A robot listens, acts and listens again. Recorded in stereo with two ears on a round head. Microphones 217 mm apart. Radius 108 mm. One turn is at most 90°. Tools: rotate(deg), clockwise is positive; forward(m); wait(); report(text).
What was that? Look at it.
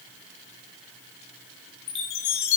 rotate(-90)
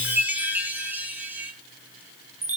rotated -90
rotate(10)
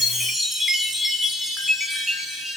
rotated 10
report("Found it: a chime, straight ahead.")